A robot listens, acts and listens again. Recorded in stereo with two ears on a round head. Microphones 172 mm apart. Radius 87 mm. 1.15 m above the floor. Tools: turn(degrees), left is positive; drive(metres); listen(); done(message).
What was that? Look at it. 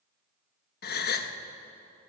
turn(degrees=55)
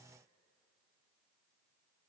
listen()
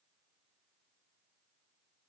done("I heard a gasp, but can't make it out now. It was about straight ahead or 70° left.")